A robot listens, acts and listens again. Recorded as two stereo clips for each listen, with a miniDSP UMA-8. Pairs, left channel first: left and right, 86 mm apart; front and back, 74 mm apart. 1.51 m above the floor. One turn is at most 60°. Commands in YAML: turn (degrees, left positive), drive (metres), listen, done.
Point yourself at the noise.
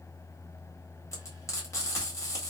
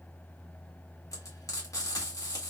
turn: 40
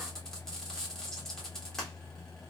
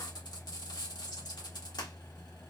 done: "Found it: frying, straight ahead."